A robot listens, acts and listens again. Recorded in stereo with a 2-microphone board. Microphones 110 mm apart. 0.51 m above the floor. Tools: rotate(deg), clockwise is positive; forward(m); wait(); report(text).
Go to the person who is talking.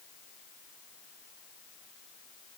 wait()
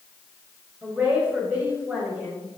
rotate(30)
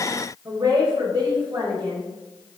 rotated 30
rotate(135)
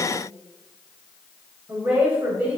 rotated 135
rotate(20)
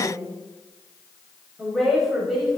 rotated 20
forward(1.0)
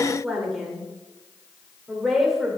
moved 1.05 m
forward(1.0)
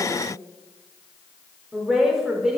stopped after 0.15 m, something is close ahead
report("I am next to the woman speaking.")